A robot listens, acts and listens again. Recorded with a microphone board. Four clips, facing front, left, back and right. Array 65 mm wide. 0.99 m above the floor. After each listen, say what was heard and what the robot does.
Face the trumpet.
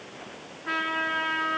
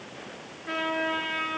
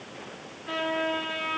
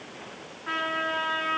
The trumpet: 45° right. Turn 45° right.
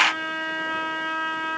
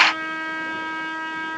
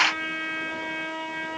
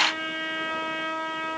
The trumpet is now 10° left. Turn 10° left.
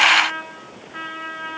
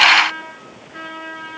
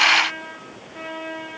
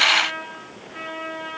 Facing the trumpet, over 4 m away.